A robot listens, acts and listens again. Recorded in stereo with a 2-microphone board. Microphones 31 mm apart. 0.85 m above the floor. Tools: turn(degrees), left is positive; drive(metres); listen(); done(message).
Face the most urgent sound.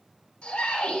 turn(degrees=40)
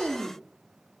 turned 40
listen()
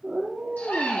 turn(degrees=100)
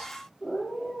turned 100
listen()
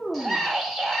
done("Found it: a scream, straight ahead, 2 to 4 m away.")